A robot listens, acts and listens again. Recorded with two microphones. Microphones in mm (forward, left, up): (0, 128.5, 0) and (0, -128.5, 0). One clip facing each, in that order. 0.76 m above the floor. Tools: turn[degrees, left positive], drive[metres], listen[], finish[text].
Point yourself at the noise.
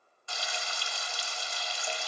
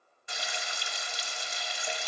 Thought: The frying: about 20° right or 160° right.
Action: turn[-20]
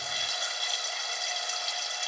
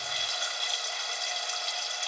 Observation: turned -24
Action: finish[Facing the frying.]